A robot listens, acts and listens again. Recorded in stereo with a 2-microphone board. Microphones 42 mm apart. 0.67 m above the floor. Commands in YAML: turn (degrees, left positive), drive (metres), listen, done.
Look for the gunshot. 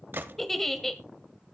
turn: -55
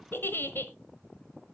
listen: true
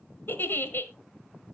done: "I heard a gunshot, but can't make it out now. It was about straight ahead or 70° right."